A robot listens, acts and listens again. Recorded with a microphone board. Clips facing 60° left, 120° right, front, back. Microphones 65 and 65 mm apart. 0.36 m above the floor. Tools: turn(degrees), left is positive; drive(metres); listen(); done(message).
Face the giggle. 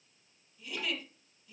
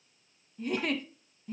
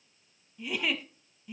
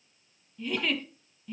turn(degrees=-80)
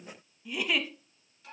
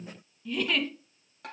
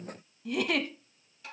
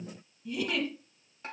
turn(degrees=-20)
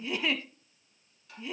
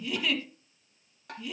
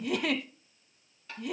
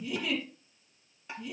done("Found it: a giggle, straight ahead, under 1 m away.")